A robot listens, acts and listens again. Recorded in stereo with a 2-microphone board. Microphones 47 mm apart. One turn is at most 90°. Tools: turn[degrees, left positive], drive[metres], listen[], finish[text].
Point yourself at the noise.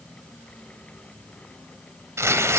Action: turn[-90]
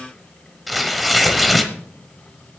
Action: finish[Found it: tearing paper, straight ahead.]